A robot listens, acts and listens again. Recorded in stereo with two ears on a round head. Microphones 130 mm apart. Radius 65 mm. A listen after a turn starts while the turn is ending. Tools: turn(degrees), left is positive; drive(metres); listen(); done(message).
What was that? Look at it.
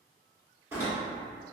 turn(degrees=-15)
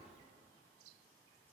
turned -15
listen()
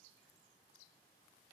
done("I heard a door slam, but can't make it out now. It was about straight ahead or 150° right.")